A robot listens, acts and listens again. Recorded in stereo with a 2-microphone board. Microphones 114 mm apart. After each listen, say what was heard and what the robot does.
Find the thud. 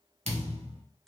Turn 90° right.
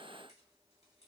I heard a thud from this way, but can't make it out now.